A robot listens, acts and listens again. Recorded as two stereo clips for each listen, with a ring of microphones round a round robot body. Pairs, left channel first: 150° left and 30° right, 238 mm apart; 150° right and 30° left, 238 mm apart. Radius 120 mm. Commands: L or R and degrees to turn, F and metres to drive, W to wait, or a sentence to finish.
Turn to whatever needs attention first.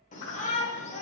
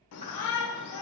R150
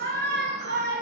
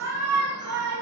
L15
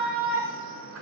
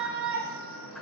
Found it: a shout, straight ahead.